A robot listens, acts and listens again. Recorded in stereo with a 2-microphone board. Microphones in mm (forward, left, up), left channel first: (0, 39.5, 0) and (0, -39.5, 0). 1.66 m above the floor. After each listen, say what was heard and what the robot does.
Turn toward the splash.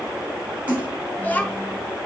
The splash: about 20° right or 160° right. Turn 20° right.
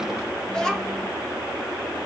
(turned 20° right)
Keep listening.
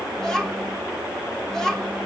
I heard a splash, but can't make it out now. It was about straight ahead or 140° right.